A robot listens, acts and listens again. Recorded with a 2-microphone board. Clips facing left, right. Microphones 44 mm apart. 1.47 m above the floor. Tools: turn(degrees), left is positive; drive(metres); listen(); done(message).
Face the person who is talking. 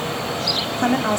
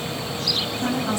turn(degrees=55)
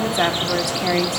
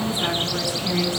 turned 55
turn(degrees=70)
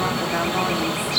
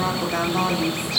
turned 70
done("Facing the woman speaking.")